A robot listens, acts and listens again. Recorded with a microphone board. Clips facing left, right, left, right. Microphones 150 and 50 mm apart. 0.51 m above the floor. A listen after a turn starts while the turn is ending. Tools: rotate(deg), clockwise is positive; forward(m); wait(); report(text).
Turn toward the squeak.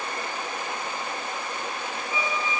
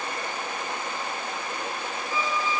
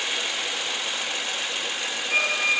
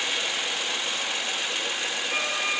rotate(-65)
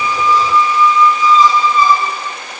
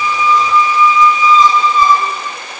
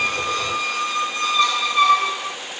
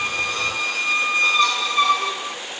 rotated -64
report("Facing the squeak, 2 to 4 m away.")